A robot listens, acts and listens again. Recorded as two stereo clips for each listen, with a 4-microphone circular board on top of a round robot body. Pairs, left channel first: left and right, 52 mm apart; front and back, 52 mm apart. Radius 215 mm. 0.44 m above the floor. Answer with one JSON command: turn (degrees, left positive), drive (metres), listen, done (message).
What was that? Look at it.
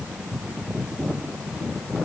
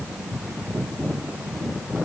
{"listen": true}
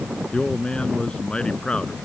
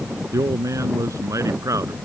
{"turn": 165}
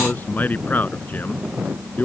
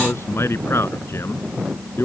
{"turn": 35}
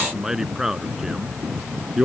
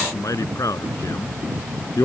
{"turn": -10}
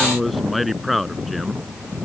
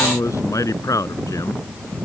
{"done": "Found it: a man speaking, straight ahead."}